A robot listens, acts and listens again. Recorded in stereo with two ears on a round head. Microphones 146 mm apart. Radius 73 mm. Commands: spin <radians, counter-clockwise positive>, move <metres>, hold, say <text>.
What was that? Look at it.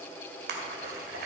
spin -1.13
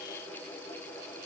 hold
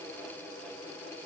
say I heard a splash, but can't make it out now. It was about straight ahead or 50° right.